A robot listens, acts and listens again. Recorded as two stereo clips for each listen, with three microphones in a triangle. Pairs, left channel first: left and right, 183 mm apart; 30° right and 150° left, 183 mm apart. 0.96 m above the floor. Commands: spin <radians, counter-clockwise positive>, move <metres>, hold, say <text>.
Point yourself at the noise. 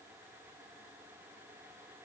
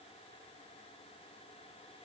hold
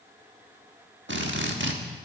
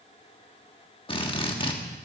spin -1.66
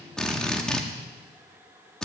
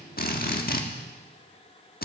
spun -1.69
say Found it: a drill, straight ahead.